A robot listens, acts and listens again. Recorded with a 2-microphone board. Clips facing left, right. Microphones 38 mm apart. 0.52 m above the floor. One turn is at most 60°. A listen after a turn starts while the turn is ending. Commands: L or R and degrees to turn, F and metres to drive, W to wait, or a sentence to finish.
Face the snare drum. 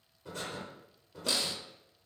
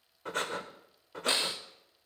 R35
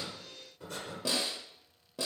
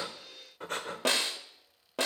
R60
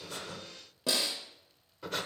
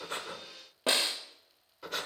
R50
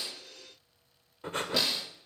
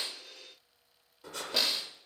Facing the snare drum, under 1 m away.